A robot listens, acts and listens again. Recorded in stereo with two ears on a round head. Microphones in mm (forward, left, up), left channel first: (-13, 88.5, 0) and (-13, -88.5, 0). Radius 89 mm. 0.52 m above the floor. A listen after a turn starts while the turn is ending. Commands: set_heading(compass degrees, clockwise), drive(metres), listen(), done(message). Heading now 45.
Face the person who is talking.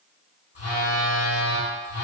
listen()
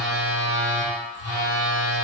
listen()
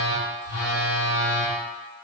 done("I can't make out anyone speaking to turn to.")